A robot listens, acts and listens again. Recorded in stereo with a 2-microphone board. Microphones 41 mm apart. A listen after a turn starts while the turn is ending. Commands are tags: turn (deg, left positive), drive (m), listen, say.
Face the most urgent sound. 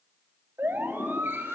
<turn deg="-65"/>
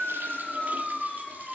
<say>Found it: a siren, straight ahead, 2 to 4 m away.</say>